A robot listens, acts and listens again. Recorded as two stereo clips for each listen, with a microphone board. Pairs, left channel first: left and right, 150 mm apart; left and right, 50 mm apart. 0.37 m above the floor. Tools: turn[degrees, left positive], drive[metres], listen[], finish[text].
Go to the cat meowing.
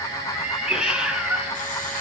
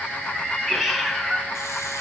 Action: turn[-30]
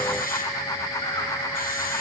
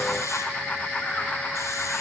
Action: listen[]
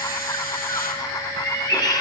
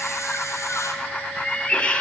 Thought: So it is at 25° left.
Action: turn[25]
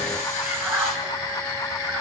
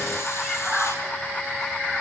Thought: The cat meowing is now 10° right.
Action: turn[-10]
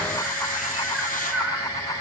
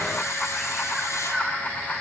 Action: drive[1.0]
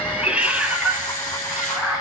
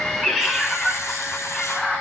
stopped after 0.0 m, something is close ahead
Action: finish[Something is in my way. I am facing the cat meowing but have not reached it.]